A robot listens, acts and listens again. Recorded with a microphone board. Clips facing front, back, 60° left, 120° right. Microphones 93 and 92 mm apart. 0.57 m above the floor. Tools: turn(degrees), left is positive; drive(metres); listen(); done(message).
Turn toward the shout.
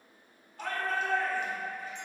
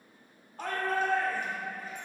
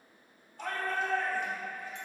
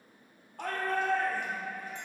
turn(degrees=-135)
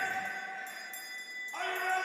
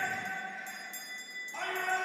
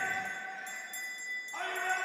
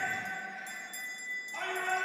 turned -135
turn(degrees=20)
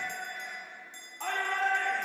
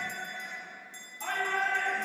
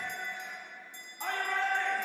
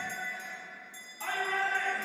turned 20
done("Found it: a shout, straight ahead, 1 to 2 m away.")